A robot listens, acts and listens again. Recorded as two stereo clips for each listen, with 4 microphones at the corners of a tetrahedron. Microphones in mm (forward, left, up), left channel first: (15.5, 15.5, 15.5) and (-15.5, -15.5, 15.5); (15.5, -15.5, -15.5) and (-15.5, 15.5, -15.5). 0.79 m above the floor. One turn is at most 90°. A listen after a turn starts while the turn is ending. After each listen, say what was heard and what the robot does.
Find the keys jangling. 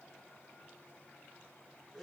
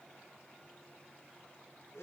Keep listening.
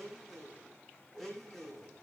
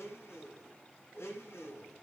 Keep listening.
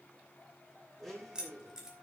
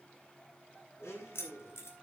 The keys jangling: 60° right. Turn 60° right.
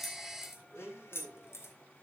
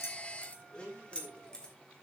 The keys jangling is now 25° left. Turn 25° left.
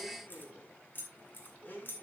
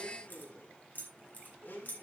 Found it: keys jangling, straight ahead.